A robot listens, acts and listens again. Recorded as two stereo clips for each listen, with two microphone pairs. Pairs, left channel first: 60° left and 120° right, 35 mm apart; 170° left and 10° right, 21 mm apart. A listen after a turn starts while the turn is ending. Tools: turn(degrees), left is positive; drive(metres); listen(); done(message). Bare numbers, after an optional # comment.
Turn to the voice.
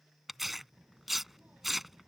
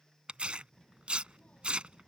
# The child speaking: 165° right.
turn(-165)
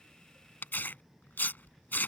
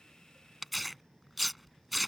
# The child speaking is now 45° right.
turn(-45)
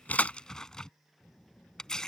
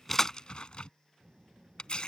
done("Facing the child speaking.")